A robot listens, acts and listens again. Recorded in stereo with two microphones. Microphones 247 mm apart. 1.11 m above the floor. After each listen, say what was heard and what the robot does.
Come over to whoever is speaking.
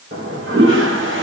Keep listening.
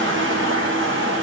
Keep listening.
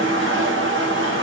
I can't make out anyone speaking, only a toilet flushing.